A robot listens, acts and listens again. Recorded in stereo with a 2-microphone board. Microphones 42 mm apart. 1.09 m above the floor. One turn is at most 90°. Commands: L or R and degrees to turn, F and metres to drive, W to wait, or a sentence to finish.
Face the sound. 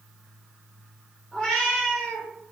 L30
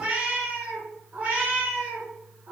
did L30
R50
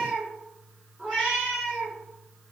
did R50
R10
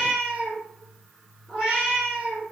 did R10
Facing the cat meowing.